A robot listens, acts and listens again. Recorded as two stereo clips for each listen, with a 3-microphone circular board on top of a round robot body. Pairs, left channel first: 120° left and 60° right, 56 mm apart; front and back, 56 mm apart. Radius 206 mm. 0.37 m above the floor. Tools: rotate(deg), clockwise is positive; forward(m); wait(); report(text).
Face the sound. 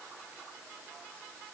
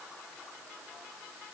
wait()
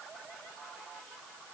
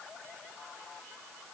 wait()
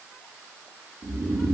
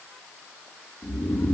rotate(55)
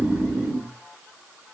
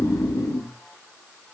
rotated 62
report("Facing the snoring, under 1 m away.")